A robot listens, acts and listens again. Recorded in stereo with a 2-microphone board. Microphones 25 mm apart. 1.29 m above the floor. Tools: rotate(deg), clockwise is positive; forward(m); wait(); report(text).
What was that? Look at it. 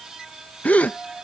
rotate(-70)
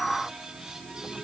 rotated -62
wait()
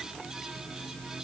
report("I heard a gasp, but can't make it out now. It was about 5° left or 50° left.")